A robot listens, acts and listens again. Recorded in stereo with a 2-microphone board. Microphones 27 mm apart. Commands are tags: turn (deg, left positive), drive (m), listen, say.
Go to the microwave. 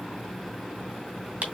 <listen/>
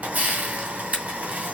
<listen/>
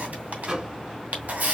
<turn deg="-35"/>
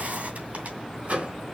<turn deg="-105"/>
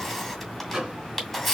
<turn deg="-30"/>
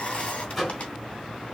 <drive m="1.0"/>
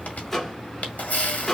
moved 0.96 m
<turn deg="15"/>
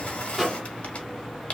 <drive m="1.0"/>
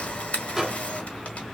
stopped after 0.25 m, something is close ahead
<turn deg="-10"/>
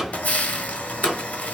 <say>Arrived at the microwave, straight ahead.</say>